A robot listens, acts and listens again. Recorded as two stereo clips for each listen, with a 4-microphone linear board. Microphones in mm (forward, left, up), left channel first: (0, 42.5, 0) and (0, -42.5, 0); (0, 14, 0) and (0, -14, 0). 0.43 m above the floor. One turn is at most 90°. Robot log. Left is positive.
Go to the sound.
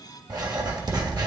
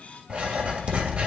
note: The writing: about 50° right or 130° right.
cmd yaw -50
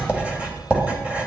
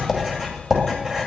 note: So it is at 20° right.
cmd yaw -20
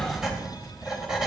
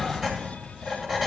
note: The writing is now 10° right.
cmd yaw -10
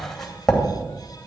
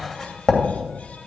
cmd fwd 1.0
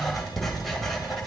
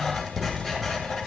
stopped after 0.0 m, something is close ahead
end: Blocked. The writing is further on, straight ahead.